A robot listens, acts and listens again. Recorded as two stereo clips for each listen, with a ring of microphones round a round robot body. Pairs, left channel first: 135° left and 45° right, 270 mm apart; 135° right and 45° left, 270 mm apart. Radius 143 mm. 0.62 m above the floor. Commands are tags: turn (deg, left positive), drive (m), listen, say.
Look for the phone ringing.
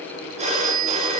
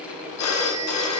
<turn deg="-110"/>
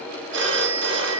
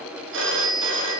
<say>Facing the phone ringing.</say>